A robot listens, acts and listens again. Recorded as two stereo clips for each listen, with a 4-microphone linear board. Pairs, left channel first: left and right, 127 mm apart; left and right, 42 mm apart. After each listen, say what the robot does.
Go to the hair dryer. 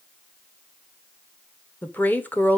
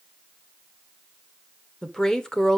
Keep listening.
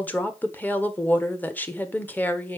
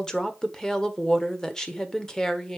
Keep listening.
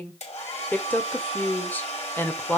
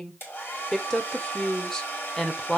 Turn 60° left.
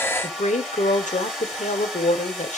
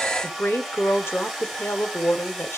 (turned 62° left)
Drive 1.0 m forward.
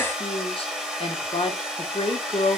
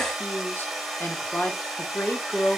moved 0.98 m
Drive 1.0 m forward.
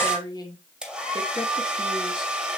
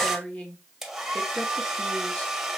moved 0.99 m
Drive 1.0 m forward.
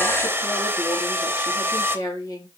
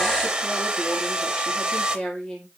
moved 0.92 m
Turn 15° right.
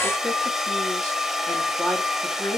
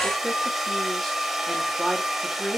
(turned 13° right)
Drive 1.0 m forward.
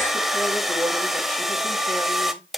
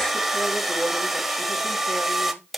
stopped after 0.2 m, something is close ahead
I am next to the hair dryer.